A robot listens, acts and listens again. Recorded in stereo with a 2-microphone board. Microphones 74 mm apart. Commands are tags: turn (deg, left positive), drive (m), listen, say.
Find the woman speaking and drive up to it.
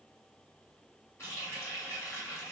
<listen/>
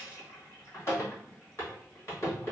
<listen/>
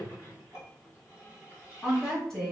<turn deg="30"/>
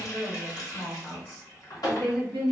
<turn deg="145"/>
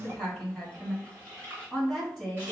<drive m="1.0"/>
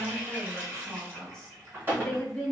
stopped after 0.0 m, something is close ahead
<say>Blocked. The woman speaking is further on, straight ahead.</say>